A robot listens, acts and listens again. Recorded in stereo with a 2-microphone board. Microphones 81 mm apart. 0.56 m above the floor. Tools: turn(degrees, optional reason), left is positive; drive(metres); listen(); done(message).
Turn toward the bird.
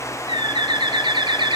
turn(degrees=-70, reason="The bird: about 70° right or 110° right.")
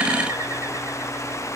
listen()
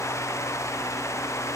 listen()
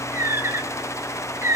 turn(degrees=-35, reason="So it is at 35° right.")
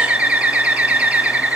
turn(degrees=-20, reason="The bird is now 20° right.")
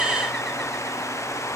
listen()
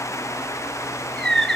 done("Facing the bird, 1 to 2 m away.")